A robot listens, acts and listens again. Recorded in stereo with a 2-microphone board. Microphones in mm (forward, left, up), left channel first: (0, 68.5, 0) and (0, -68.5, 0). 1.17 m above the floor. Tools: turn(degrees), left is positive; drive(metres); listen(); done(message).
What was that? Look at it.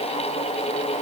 listen()
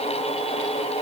listen()
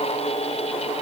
done("I can't make out anything to turn to.")